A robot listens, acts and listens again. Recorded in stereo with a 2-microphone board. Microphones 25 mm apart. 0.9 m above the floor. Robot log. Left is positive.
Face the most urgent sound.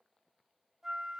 cmd idle
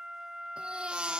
note: The baby crying: about 45° right or 135° right.
cmd yaw -45
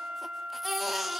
end: Found it: a baby crying, straight ahead, 1 to 2 m away.